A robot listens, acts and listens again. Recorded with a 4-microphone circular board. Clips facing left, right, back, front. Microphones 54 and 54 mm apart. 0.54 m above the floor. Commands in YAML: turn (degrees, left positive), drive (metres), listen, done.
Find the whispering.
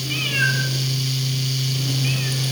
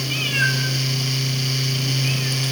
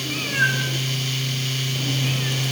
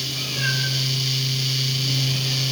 listen: true
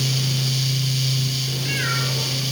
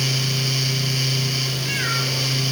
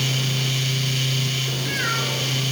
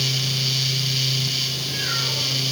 listen: true
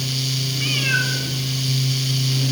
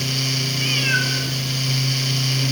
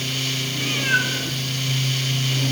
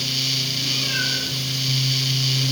done: "I can't make out whispering to turn to."